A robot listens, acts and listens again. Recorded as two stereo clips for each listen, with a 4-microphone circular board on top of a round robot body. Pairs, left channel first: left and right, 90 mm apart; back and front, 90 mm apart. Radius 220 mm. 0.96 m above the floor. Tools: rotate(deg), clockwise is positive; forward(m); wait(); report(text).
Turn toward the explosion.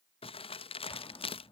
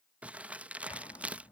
rotate(-135)
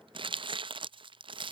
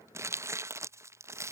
report("Facing where the explosion came from. I can't hear it now.")